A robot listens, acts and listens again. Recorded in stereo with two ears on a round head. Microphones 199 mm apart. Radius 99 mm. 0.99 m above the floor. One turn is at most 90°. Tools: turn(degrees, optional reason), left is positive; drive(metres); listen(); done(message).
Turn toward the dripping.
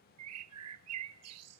listen()
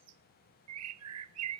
listen()
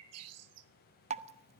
turn(degrees=-30, reason="The dripping: about 30° right or 150° right.")
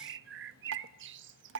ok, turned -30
turn(degrees=-90, reason="So it is at 120° right.")
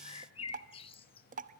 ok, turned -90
turn(degrees=-35, reason="The dripping is now 35° right.")
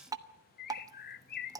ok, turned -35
turn(degrees=-15, reason="The dripping is now 15° right.")
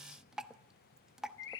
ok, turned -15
done("Facing the dripping.")